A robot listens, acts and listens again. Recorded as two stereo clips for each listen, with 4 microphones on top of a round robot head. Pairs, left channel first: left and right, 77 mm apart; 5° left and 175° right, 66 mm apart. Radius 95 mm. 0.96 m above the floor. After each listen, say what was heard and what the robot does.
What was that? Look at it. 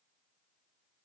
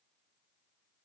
Keep listening.
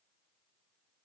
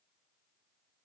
Keep listening.
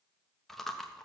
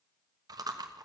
The chewing: 175° left. Turn 175° left.
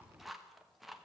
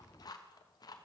Found it: chewing, straight ahead.